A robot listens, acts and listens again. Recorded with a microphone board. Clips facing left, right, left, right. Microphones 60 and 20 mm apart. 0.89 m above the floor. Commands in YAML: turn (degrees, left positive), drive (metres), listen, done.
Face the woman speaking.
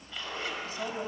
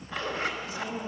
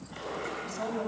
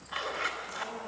turn: 35
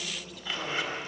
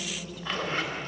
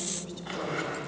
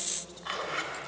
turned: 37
done: "Facing the woman speaking, over 4 m away."